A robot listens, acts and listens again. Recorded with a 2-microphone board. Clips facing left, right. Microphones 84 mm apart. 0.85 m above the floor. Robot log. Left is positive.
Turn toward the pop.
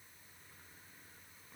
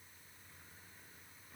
cmd idle
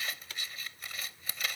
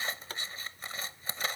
note: The pop: about 40° right or 140° right.
cmd yaw -40
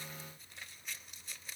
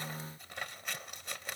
cmd idle
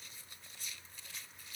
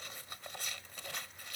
end: I heard a pop, but can't make it out now. It was about straight ahead or 100° right.